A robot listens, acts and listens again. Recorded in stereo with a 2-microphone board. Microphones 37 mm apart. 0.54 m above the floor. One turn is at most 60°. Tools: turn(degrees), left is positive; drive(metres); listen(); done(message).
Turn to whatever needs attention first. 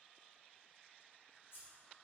listen()
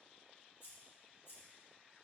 listen()
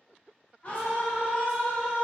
turn(degrees=40)
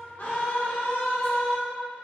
turn(degrees=60)
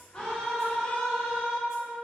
turn(degrees=25)
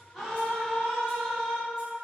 done("Facing the scream, 1 to 2 m away.")